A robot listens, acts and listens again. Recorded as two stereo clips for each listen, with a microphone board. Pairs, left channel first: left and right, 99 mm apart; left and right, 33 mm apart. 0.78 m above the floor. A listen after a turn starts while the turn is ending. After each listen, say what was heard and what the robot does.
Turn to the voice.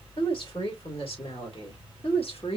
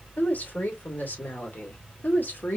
The woman speaking: about 75° left or 105° left. Turn 75° left.
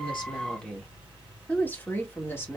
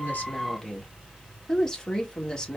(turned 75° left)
So it is at 25° left. Turn 25° left.
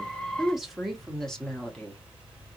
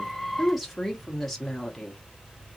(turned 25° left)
The woman speaking is now 10° left. Turn 10° left.
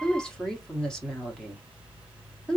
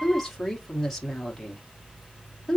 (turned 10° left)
Found it: a woman speaking, straight ahead, 1 to 2 m away.